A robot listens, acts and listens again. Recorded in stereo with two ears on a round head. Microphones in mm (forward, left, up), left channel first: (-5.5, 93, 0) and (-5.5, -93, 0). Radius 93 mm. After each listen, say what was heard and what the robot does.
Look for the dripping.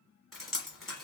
Turn 30° left.
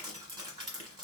So it is at 30° right. Turn 30° right.
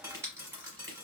The dripping is now 15° right. Turn 15° right.
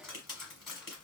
Found it: dripping, straight ahead, 1 to 2 m away.